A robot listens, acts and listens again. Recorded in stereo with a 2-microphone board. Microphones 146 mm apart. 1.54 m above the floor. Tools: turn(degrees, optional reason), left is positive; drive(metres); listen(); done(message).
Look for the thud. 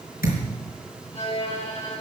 turn(degrees=75, reason="The thud: about 75° left or 105° left.")
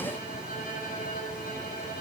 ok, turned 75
listen()
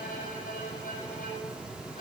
done("I heard a thud, but can't make it out now. It was about straight ahead or 30° left.")